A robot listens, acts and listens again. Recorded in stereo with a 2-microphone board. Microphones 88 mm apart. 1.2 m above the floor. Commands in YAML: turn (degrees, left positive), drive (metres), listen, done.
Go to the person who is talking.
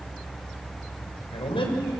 turn: 90
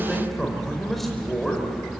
drive: 1.0
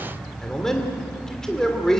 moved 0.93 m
drive: 1.0
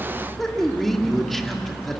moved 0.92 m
drive: 1.0
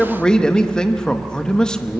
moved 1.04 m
turn: 10
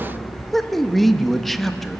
drive: 1.0
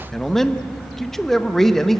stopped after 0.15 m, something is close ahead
done: "I am next to the man speaking."